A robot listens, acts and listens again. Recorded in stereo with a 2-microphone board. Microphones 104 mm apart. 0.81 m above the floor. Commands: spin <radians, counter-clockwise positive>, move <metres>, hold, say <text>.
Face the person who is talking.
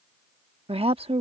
spin -1.13
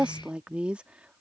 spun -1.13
spin -0.17
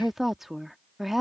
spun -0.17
say Found it: a woman speaking, straight ahead.